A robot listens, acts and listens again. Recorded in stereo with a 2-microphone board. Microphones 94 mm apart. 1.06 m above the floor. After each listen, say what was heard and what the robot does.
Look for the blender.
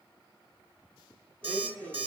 Turn 30° left.
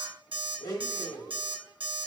So it is at 135° left. Turn 135° left.
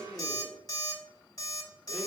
The blender is now 25° left. Turn 25° left.
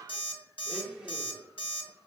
Found it: a blender, straight ahead, 1 to 2 m away.